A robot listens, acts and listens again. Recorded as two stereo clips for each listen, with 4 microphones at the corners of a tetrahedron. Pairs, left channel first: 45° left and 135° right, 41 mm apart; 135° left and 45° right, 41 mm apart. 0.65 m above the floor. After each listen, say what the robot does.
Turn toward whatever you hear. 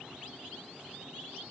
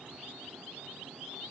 Keep listening.
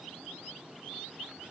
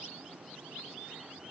Keep listening.
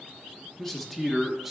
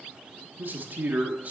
Turn 55° right.
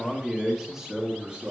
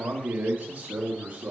Turn 85° right.
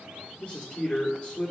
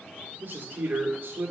Turn 25° right.
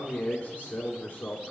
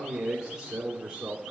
Turn 15° left.
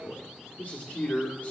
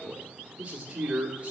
Found it: a man speaking, straight ahead.